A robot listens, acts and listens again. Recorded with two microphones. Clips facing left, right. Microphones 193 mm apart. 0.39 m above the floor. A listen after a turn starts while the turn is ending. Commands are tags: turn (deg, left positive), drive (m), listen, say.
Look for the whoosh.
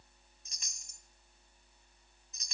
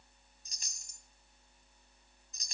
<listen/>
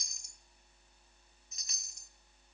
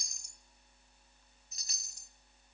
<listen/>
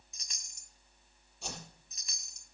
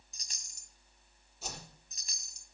<turn deg="-30"/>
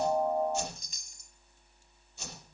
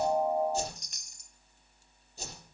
<turn deg="-145"/>
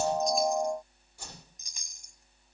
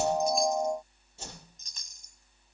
<turn deg="-25"/>
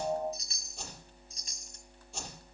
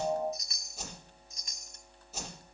<say>Found it: a whoosh, straight ahead.</say>